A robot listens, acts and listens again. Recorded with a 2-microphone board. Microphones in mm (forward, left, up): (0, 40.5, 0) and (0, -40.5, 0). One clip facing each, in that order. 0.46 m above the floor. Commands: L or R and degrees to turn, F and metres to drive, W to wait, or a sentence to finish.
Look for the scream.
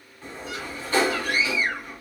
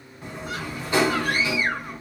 R50
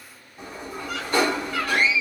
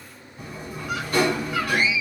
R10
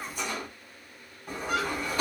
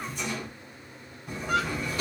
Facing the scream.